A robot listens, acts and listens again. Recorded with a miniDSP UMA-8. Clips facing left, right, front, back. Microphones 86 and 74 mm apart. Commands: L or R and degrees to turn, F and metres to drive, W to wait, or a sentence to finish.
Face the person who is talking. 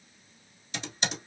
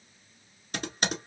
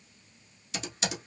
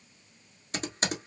W
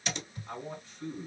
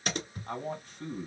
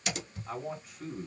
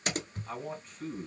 R80
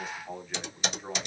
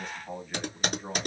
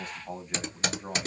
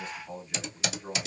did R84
Found it: a man speaking, straight ahead, 1 to 2 m away.